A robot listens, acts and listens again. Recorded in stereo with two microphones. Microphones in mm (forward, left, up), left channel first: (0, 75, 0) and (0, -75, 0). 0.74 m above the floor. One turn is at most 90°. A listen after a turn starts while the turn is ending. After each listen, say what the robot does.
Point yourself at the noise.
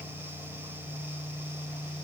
Keep listening.
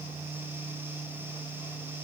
Keep listening.
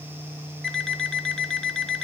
Turn 30° left.
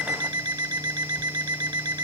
Turn 30° right.
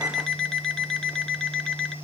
Found it: an alarm clock, straight ahead.